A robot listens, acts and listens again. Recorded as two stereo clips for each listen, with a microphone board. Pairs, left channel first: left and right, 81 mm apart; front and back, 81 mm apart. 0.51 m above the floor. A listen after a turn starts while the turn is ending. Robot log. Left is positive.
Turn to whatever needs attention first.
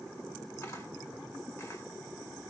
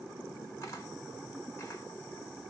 cmd idle
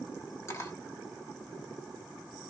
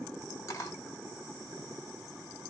cmd idle
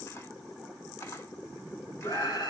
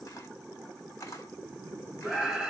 note: The scream: 95° left.
cmd yaw +95
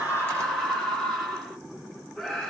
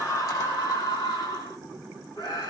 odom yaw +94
end: Found it: a scream, straight ahead.